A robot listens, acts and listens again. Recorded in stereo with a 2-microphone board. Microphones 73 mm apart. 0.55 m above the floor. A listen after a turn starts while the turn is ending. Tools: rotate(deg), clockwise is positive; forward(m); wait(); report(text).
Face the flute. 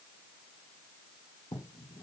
wait()
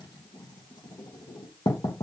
wait()
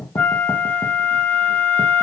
rotate(-20)
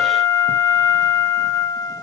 rotate(-140)
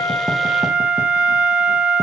rotate(15)
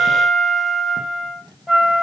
report("Found it: a flute, straight ahead, 2 to 4 m away.")